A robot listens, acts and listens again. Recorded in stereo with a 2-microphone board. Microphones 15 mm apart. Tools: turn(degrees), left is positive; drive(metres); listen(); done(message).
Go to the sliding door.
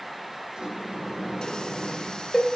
turn(degrees=-60)
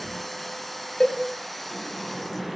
drive(metres=1.0)
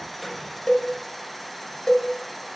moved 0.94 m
listen()
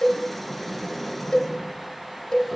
drive(metres=1.0)
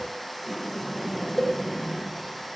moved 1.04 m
drive(metres=1.0)
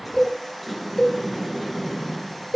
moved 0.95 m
drive(metres=1.0)
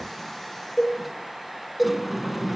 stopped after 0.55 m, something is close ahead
done("Arrived at the sliding door, straight ahead.")